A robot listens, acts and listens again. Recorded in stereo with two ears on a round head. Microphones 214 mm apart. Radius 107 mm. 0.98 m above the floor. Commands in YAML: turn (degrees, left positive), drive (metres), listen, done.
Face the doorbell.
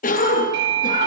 turn: -50
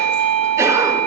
turn: -80
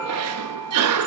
listen: true
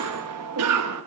listen: true
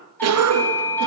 turn: 10
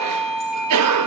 done: "Facing the doorbell, 2 to 4 m away."